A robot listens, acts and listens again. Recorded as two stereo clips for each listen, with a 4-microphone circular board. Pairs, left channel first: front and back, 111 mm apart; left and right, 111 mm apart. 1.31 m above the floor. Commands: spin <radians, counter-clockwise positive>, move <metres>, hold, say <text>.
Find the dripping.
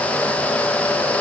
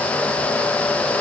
hold
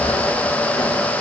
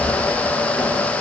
hold
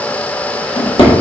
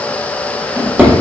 say I can't make out dripping, only a drawer.